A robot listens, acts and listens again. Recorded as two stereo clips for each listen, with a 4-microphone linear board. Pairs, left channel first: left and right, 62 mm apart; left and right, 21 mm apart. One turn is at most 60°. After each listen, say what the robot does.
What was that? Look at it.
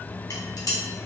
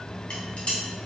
Turn 60° left.
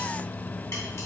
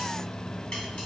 Keep listening.
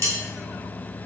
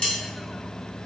Turn 45° left.
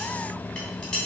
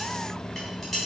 Turn 10° left.
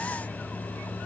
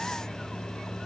Keep listening.
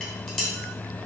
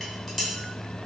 Facing the dishes clattering, 1 to 2 m away.